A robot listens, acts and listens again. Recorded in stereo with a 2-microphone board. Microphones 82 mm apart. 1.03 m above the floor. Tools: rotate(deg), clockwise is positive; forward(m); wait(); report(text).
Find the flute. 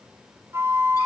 rotate(35)
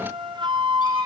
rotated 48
rotate(95)
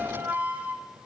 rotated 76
rotate(20)
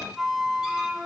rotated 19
report("Found it: a flute, straight ahead, under 1 m away.")